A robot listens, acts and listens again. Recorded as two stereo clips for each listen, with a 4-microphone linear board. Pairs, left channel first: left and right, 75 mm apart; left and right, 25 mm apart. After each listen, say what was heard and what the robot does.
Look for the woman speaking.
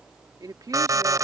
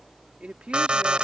The woman speaking: about 55° right or 125° right. Turn 55° right.
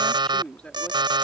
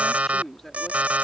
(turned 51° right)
So it is at 15° left. Turn 15° left.
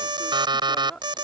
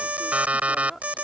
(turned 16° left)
The woman speaking is now 15° left. Turn 15° left.
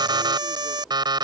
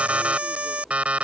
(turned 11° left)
Keep listening.
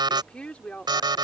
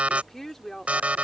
The woman speaking is now 15° left. Turn 15° left.
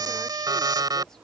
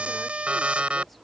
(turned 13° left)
Keep listening.
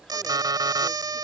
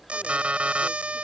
Keep listening.
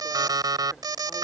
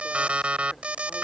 Facing where the woman speaking came from. I can't hear it now.